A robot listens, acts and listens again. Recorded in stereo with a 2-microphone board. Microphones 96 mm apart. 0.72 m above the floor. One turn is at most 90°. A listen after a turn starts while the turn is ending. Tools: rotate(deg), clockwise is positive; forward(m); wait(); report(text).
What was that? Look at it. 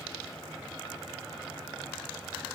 wait()
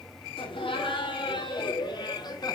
rotate(-45)
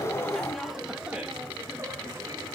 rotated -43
rotate(25)
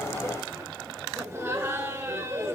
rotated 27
rotate(20)
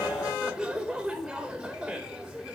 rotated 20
report("Facing the laughter.")